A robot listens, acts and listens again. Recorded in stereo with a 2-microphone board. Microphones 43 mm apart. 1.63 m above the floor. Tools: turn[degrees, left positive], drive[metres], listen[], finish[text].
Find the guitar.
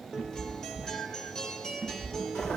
Action: turn[30]
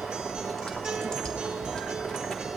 Action: listen[]
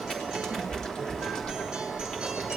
Action: listen[]
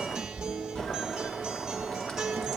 Thought: So it is at 20° right.
Action: turn[-20]
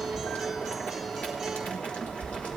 Action: listen[]
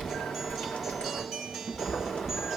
Action: finish[Facing the guitar.]